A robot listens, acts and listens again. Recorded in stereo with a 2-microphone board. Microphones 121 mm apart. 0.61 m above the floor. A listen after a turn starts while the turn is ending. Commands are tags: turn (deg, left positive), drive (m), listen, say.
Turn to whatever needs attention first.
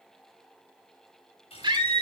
<turn deg="-40"/>
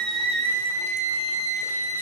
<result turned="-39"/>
<turn deg="-95"/>
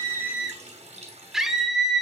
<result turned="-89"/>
<say>Facing the scream.</say>